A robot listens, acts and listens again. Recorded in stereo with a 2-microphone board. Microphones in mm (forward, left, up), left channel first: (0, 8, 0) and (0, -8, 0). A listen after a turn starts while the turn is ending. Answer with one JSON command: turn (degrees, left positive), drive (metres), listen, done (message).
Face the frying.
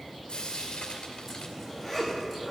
{"turn": 70}
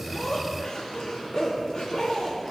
{"listen": true}
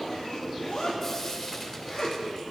{"turn": 40}
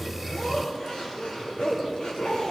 {"listen": true}
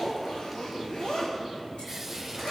{"listen": true}
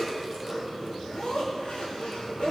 {"done": "Facing where the frying came from. I can't hear it now."}